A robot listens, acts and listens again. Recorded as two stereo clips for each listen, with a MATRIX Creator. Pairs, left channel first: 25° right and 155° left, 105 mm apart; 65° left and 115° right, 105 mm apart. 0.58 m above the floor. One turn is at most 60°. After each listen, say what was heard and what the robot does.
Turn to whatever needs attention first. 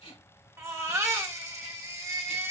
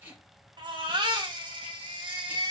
The baby crying: 145° right. Turn 60° right.
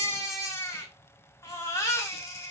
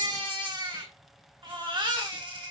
The baby crying is now 80° right. Turn 60° right.
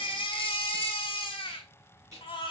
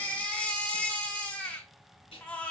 Facing the baby crying, under 1 m away.